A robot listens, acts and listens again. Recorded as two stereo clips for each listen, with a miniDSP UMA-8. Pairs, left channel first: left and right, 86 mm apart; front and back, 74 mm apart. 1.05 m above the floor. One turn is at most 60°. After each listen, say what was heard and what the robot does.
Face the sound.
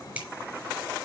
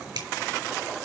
The finger snap: 165° right. Turn 60° right.
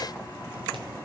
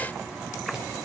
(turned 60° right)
Nothing new. It was at 105° right. Turn 60° right.
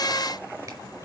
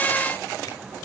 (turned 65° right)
Nothing new. It was at 40° right. Turn 40° right.
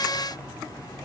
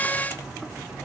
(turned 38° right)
I heard a finger snap from this way, but can't make it out now.